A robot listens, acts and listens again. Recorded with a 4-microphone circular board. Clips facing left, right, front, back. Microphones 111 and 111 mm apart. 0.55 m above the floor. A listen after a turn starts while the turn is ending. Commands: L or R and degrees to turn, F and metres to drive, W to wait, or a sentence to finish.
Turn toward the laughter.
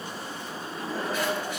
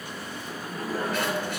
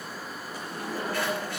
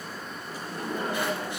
R145
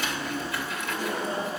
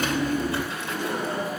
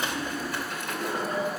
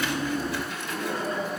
R70
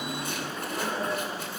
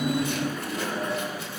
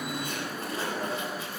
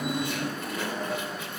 L20
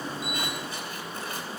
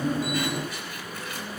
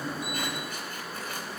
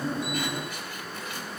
W
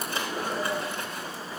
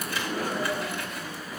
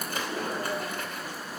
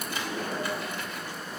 Facing the laughter.